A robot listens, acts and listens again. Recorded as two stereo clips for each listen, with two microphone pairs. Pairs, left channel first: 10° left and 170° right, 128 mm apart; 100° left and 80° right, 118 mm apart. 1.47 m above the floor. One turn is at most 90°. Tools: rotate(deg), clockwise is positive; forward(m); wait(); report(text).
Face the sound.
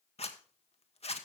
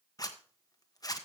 rotate(-45)
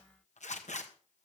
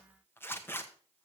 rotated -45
rotate(-30)
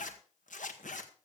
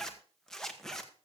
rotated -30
rotate(-15)
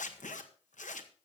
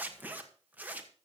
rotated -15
report("Found it: a zipper, straight ahead, 1 to 2 m away.")